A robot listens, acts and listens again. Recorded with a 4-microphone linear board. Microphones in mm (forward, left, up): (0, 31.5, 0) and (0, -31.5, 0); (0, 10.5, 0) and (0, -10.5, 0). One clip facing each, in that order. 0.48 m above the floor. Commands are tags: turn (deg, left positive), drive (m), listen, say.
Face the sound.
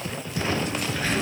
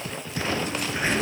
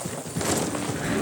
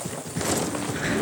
<turn deg="-25"/>
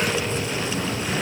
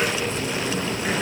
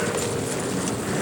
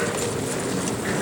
<turn deg="-125"/>
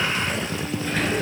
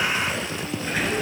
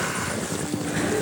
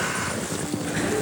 <say>Facing the sliding door, over 4 m away.</say>